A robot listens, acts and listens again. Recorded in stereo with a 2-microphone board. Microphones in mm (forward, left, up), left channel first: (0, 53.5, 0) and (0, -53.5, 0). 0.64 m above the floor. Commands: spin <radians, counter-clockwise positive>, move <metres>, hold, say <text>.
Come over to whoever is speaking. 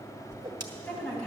spin 0.52
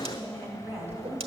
spin -0.35
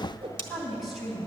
move 1.0
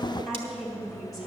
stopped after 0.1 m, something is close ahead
say Something is in my way. I am facing the woman speaking but have not reached it.